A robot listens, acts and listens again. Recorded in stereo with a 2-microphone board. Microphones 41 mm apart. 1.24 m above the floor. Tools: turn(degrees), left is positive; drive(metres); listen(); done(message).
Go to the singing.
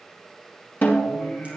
turn(degrees=30)
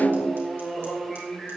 drive(metres=1.0)
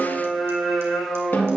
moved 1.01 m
drive(metres=1.0)
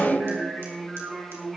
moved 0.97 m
drive(metres=1.0)
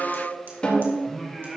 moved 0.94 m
drive(metres=1.0)
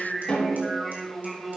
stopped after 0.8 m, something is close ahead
done("I am next to the singing.")